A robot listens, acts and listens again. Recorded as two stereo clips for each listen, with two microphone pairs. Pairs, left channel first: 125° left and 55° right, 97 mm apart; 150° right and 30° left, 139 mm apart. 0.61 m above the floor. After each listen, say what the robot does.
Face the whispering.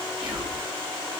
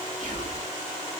Turn 30° left.
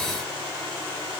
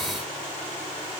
Keep listening.
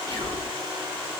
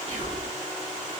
Found it: whispering, straight ahead, 2 to 4 m away.